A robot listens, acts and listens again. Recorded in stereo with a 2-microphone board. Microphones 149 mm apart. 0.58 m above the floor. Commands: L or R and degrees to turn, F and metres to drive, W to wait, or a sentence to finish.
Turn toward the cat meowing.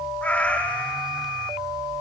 L30
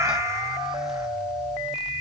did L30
R20
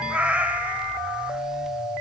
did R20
R10
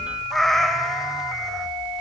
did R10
Found it: a cat meowing, straight ahead, 1 to 2 m away.